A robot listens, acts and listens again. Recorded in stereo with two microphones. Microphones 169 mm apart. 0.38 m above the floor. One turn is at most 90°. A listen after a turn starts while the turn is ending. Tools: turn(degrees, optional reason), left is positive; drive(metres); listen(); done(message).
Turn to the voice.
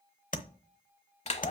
listen()
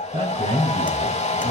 turn(degrees=-50, reason="The man speaking: about 50° right or 130° right.")
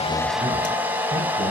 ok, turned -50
listen()
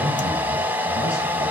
listen()
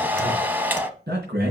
turn(degrees=-65, reason="So it is at 65° right.")
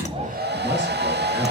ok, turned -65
listen()
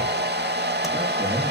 listen()
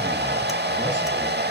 done("Facing where the man speaking came from. I can't hear it now.")